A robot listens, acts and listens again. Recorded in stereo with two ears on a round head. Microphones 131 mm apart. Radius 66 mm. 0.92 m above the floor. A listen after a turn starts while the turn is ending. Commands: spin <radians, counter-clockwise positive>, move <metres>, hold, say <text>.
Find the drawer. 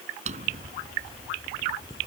spin -0.96
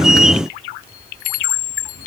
hold
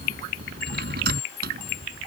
spin -1.22
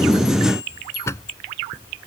spin 0.35
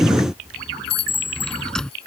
say Facing the drawer.